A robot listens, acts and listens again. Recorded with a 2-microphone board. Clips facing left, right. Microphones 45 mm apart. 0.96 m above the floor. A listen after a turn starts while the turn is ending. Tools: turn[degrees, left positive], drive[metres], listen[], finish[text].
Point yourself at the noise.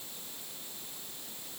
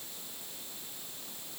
Action: listen[]
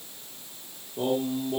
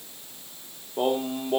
Thought: The singing: about 55° right or 125° right.
Action: turn[-55]
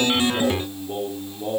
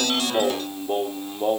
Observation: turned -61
Thought: So it is at 60° right.
Action: turn[-60]
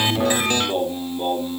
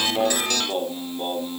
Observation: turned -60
Action: finish[Facing the singing.]